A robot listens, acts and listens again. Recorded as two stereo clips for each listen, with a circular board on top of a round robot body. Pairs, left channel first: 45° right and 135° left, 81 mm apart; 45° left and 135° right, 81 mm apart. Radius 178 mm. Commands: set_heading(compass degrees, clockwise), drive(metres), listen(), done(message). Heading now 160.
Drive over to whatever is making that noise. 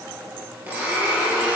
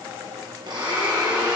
set_heading(315)
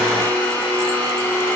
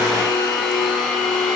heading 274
set_heading(314)
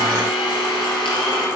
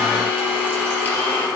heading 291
set_heading(311)
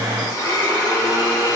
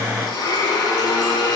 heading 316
drive(1.0)
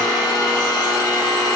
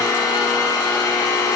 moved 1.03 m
drive(1.0)
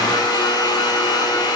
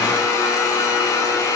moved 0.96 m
set_heading(326)
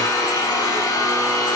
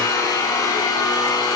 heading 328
drive(1.0)
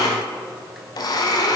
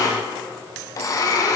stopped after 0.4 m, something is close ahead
done("I am next to the blender.")